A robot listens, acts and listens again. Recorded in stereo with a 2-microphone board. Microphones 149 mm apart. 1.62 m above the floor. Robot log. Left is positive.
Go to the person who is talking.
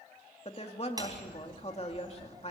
note: The woman speaking: about 45° left or 135° left.
cmd yaw +45
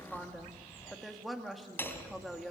cmd fwd 1.0
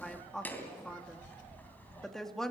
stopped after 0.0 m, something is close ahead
end: Something is in my way. I am facing the woman speaking but have not reached it.